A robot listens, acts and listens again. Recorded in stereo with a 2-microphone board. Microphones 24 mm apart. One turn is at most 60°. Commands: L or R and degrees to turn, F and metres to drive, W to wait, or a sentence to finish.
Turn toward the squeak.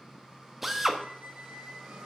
R60
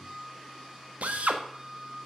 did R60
R10
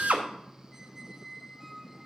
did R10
Facing the squeak, under 1 m away.